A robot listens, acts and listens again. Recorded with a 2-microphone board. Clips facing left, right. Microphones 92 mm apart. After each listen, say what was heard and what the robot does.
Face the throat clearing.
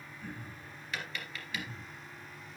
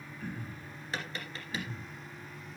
The throat clearing: about 60° right or 120° right. Turn 60° right.
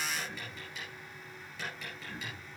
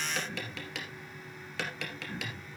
Facing the throat clearing.